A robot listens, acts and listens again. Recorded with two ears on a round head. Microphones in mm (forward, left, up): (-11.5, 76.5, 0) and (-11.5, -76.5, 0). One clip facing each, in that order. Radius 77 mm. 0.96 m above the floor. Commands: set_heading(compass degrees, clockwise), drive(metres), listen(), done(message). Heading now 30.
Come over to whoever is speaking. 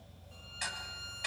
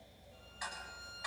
listen()
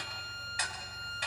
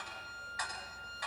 listen()
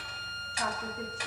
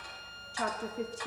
set_heading(75)
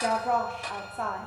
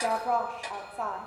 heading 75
drive(1.0)
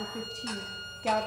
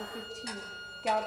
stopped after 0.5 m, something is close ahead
done("Something is in my way. I am facing the woman speaking but have not reached it.")